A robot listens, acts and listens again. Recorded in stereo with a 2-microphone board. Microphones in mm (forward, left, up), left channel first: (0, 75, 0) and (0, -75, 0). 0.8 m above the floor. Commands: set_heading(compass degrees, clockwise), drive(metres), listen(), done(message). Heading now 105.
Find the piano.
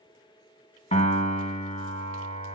set_heading(65)
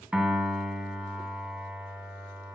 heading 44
set_heading(54)
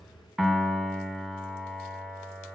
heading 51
done("Facing the piano.")